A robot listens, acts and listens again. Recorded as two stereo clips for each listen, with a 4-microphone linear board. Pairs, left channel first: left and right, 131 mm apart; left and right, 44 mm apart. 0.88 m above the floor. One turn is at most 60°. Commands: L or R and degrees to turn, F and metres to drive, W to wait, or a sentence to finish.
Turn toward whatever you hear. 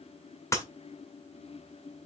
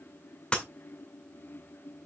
L20
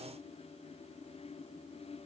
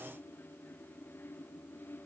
W
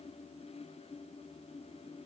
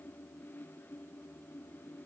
I heard breaking glass, but can't make it out now. It was about straight ahead or 140° left.